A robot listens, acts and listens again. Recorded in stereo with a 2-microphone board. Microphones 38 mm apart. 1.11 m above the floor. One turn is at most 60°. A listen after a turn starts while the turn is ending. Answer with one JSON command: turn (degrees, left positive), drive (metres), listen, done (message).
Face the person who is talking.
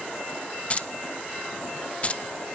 {"listen": true}
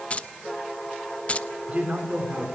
{"turn": -35}
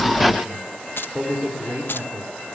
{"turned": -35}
{"turn": -60}
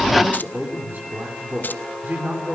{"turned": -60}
{"turn": -55}
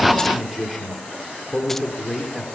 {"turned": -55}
{"done": "Facing the man speaking, 2 to 4 m away."}